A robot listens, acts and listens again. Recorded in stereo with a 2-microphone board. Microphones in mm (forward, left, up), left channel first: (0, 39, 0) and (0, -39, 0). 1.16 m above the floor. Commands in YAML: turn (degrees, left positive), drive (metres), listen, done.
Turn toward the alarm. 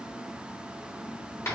listen: true
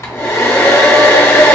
listen: true
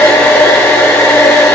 done: "I can't make out an alarm, only a hair dryer."